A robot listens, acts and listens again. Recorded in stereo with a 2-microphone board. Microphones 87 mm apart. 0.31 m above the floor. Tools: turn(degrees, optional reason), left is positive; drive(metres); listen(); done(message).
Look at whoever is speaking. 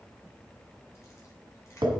listen()
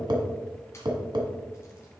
listen()
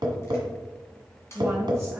turn(degrees=-30, reason="The woman speaking: about 30° right or 150° right.")
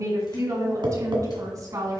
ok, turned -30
turn(degrees=-135, reason="So it is at 135° right.")
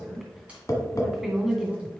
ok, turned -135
done("Facing the woman speaking, 2 to 4 m away.")